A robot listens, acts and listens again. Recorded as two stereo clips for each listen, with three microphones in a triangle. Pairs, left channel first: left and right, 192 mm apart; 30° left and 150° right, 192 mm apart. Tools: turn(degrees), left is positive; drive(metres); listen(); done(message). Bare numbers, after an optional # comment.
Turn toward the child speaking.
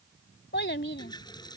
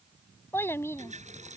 # The child speaking: 105° left.
turn(105)
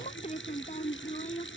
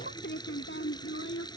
# The child speaking is now 40° left.
turn(40)
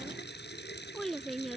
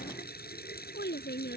done("Found it: a child speaking, straight ahead.")